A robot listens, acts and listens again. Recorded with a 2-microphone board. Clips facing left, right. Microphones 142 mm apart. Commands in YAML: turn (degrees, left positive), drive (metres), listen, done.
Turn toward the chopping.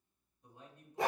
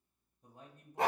listen: true
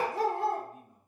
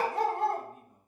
listen: true
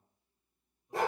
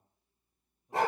done: "I can't make out chopping, only a dog barking and a man speaking."